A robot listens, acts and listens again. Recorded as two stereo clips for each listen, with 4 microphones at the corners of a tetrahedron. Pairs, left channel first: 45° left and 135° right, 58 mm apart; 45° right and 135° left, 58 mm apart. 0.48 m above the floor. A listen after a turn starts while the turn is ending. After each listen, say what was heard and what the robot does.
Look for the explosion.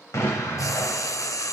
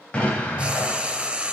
The explosion: 20° left. Turn 20° left.
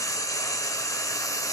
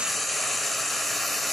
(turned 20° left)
I heard an explosion from this way, but can't make it out now.